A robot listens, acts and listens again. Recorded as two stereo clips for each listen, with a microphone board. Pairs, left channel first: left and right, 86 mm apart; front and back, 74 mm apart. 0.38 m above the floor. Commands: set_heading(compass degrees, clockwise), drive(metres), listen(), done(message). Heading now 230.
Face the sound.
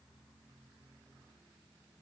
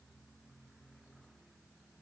listen()
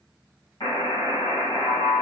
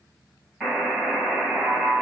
set_heading(140)
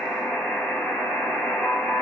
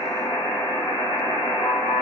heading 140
done("Facing the buzzer.")